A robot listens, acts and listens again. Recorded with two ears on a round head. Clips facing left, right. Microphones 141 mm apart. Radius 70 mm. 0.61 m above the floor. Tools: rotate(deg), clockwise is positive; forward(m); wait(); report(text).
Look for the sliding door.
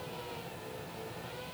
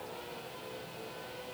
wait()
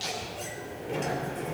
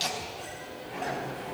rotate(-55)
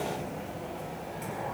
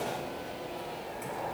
report("Facing the sliding door.")